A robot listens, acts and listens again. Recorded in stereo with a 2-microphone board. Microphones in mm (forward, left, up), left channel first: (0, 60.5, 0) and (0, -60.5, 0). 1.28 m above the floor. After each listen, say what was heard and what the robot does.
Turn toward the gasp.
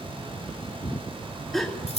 Turn 30° left.
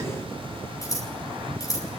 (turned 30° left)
Keep listening.
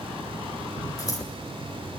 I heard a gasp, but can't make it out now. It was about 30° right or 150° left.